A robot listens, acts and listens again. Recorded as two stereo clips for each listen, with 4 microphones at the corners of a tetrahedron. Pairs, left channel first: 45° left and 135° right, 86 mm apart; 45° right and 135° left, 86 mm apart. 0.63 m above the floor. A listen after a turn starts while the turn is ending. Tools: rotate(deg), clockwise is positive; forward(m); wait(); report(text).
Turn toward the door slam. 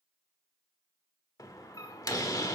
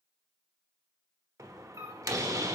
rotate(-90)
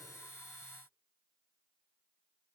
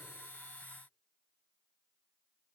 report("Facing where the door slam came from. I can't hear it now.")